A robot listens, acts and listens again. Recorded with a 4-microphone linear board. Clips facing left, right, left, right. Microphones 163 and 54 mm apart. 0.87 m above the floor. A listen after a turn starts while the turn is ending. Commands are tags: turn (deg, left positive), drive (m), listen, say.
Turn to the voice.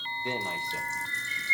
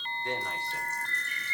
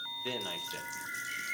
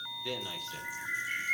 <turn deg="20"/>
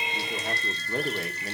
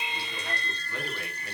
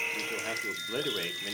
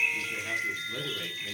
<turn deg="140"/>
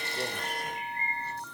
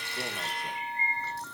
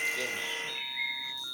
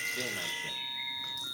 <listen/>
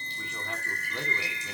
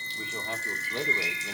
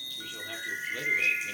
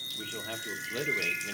<turn deg="-25"/>
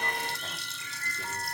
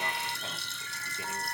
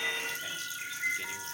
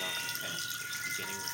<listen/>
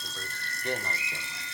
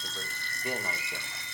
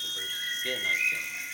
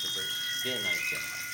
<turn deg="-10"/>
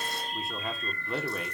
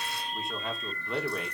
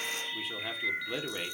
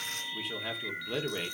<say>Found it: a man speaking, straight ahead.</say>